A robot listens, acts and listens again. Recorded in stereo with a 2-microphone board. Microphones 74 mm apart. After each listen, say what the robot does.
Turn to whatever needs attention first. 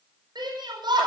Turn 70° right.
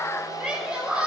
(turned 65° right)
Found it: a shout, straight ahead.